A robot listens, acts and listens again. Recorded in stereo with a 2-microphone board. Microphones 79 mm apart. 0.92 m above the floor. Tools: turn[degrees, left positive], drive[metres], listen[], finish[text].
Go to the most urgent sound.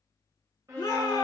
Thought: The shout: about 45° left or 135° left.
Action: turn[45]
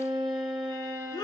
Thought: So it is at 85° left.
Action: turn[85]
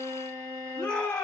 Thought: The shout is now 35° left.
Action: turn[35]
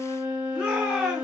Action: drive[1.0]
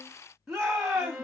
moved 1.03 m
Action: drive[1.0]
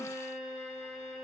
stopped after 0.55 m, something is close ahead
Action: listen[]
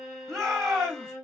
Action: finish[Arrived at the shout, straight ahead.]